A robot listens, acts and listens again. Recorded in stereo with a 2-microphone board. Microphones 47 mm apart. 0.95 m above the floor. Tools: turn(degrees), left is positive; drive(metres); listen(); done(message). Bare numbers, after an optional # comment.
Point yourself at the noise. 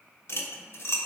# The cutlery clinking: about 60° left or 120° left.
turn(60)
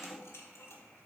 listen()
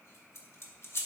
# So it is at 65° left.
turn(65)
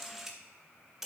done("Facing the cutlery clinking.")